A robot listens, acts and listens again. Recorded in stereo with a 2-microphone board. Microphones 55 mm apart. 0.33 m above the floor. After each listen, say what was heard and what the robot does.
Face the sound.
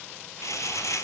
Turn 90° left.
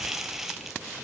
So it is at 10° right. Turn 10° right.
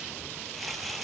Facing the crumpling.